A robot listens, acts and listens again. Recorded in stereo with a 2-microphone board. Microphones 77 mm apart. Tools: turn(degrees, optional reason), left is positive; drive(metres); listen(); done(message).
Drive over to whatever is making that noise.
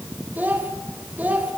turn(degrees=-20, reason="The child speaking: about 20° right or 160° right.")
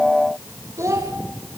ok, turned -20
turn(degrees=-140, reason="So it is at 140° right.")
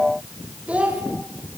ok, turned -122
turn(degrees=-15, reason="The child speaking is now 15° right.")
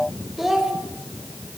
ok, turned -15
drive(metres=1.0)
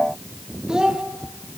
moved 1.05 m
turn(degrees=-10, reason="The child speaking is now 10° right.")
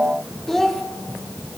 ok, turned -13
drive(metres=1.0)
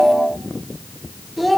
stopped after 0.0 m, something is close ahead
done("Something is in my way. I am facing the child speaking but have not reached it.")